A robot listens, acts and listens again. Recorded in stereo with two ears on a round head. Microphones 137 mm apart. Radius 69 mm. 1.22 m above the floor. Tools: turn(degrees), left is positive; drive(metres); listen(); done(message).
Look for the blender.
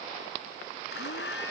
turn(degrees=90)
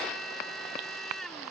done("Found it: a blender, straight ahead.")